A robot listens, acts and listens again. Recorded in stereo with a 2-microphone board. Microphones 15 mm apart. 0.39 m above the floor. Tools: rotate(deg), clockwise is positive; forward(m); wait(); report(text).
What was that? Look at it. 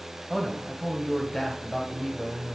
rotate(-50)
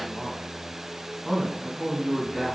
rotate(-20)
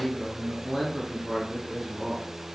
report("Facing the man speaking, 2 to 4 m away.")